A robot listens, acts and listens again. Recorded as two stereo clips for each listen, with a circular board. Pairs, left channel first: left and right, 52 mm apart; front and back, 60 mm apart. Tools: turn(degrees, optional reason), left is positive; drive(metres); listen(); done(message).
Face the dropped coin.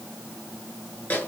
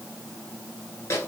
listen()
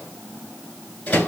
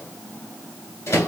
listen()
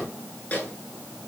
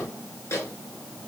done("I can't make out a dropped coin to turn to.")